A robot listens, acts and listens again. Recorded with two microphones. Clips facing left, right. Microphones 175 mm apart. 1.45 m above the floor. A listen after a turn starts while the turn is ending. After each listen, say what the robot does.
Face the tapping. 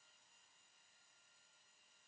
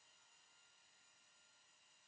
Keep listening.
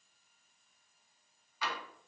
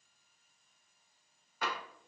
Turn 50° right.
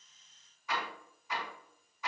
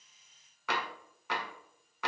Turn 80° right.
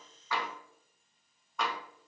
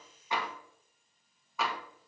Found it: tapping, straight ahead, 1 to 2 m away.